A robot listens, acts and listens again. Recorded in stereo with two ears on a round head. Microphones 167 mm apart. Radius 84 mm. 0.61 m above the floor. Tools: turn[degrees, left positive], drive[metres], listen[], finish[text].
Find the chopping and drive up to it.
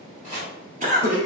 Thought: The chopping: about 40° right or 140° right.
Action: turn[-40]
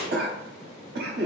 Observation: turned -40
Thought: So it is at 10° right.
Action: turn[-10]
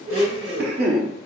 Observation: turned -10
Action: listen[]
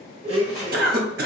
Action: listen[]
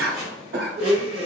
Action: drive[1.0]
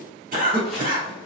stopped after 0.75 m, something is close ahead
Action: listen[]
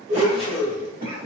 Action: listen[]
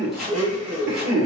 Action: finish[Arrived at the chopping, straight ahead.]